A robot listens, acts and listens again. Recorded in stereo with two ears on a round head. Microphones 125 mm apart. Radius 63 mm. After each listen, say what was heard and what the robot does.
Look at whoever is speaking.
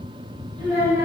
The child speaking: about 20° right or 160° right. Turn 20° right.
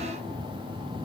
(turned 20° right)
Keep listening.
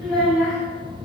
Facing the child speaking.